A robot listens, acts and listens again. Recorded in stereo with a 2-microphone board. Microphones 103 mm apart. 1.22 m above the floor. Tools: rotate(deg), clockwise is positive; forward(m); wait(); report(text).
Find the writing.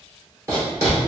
rotate(25)
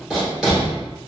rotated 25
report("Found it: writing, straight ahead, 1 to 2 m away.")